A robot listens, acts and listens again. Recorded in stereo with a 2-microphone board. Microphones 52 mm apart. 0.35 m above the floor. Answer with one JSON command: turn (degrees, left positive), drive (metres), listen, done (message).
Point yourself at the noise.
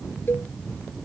{"turn": 45}
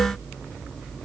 {"listen": true}
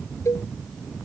{"turn": 90}
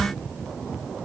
{"listen": true}
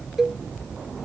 {"turn": -10}
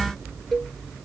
{"done": "Facing the cowbell."}